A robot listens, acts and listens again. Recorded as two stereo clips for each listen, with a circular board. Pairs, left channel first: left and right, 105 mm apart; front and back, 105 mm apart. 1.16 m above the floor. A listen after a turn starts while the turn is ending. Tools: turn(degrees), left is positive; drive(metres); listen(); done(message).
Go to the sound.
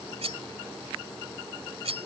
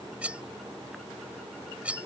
turn(degrees=-105)
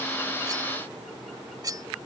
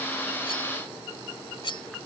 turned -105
turn(degrees=-40)
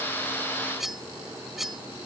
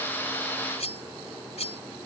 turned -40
drive(metres=1.0)
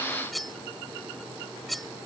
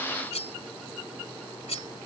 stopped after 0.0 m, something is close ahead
done("Something is in my way. I am facing the cutlery clinking but have not reached it.")